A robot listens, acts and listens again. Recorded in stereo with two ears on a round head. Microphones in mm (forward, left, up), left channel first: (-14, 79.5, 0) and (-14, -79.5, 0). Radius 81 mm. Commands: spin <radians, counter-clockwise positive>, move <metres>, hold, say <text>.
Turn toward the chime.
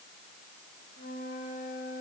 hold
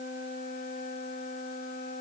hold
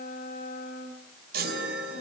spin -0.96
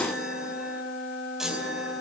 say Facing the chime, over 4 m away.